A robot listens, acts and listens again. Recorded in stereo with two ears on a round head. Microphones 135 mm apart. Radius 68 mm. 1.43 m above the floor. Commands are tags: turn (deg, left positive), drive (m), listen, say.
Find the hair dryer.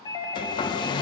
<turn deg="30"/>
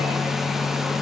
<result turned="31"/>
<say>Found it: a hair dryer, straight ahead.</say>